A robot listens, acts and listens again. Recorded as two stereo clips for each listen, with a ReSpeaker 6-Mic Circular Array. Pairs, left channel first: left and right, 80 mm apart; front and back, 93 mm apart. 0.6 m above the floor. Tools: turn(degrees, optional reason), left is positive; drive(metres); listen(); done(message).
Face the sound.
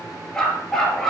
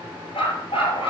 done("Found it: a dog barking, straight ahead.")